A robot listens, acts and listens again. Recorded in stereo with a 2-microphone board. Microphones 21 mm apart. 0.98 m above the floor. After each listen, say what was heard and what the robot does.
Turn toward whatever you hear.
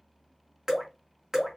The dripping: about 20° right or 160° right. Turn 20° right.
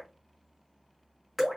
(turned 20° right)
Facing the dripping.